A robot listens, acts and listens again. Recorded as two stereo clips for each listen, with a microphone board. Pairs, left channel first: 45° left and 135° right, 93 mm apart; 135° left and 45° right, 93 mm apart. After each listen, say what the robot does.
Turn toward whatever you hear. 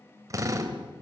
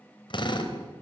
Turn 170° left.
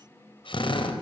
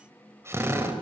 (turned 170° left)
Turn 20° left.
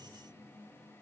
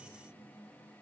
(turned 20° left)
Keep listening.
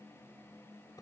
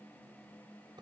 Keep listening.
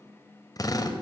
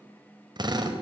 Facing the drill.